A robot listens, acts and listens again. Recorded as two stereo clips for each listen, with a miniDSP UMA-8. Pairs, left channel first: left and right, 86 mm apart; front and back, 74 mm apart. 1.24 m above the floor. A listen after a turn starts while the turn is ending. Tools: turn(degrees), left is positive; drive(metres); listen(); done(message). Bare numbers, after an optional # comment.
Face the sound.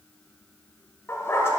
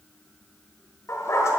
# The dog barking: 35° left.
turn(35)
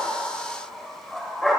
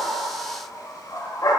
done("Found it: a dog barking, straight ahead.")